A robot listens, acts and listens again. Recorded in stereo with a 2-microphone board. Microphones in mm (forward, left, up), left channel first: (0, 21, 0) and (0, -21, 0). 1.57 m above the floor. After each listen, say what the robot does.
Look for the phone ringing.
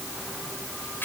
Keep listening.
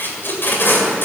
Keep listening.
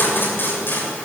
I can't make out a phone ringing, only tape being pulled.